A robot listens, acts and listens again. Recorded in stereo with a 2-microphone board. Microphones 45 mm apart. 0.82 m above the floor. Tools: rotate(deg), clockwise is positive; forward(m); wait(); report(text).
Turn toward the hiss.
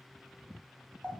wait()
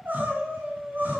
wait()
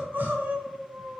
report("I can't make out a hiss to turn to.")